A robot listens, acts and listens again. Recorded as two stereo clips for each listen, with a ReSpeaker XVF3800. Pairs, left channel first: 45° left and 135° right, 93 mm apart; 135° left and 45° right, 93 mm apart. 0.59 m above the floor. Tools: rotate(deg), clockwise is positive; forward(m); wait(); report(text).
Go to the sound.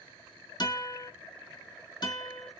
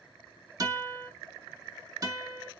forward(1.0)
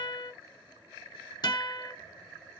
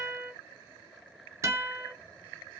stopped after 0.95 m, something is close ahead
rotate(-15)
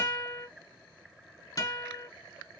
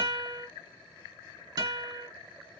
report("Arrived at the guitar, straight ahead.")